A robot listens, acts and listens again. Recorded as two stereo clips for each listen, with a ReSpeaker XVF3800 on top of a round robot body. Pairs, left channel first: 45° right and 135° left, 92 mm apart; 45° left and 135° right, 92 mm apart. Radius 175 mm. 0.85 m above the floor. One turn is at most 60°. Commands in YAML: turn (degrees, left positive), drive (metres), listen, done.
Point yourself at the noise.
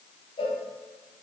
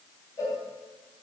turn: -10
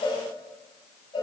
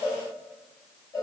done: "Facing the cowbell."